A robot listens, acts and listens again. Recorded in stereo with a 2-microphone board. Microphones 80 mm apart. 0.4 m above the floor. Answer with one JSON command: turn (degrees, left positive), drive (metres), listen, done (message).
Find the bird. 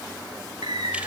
{"turn": -90}
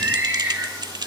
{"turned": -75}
{"turn": -25}
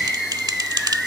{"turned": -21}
{"done": "Found it: a bird, straight ahead."}